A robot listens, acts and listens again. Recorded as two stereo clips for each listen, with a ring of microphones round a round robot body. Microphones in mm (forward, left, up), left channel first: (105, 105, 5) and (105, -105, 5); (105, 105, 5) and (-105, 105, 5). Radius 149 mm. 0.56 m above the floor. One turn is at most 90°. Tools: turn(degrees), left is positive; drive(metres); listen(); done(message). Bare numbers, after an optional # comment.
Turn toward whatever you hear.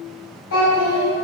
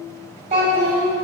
# The child speaking: 115° left.
turn(90)
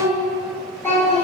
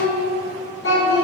# The child speaking is now 10° left.
turn(10)
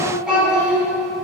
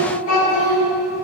done("Facing the child speaking.")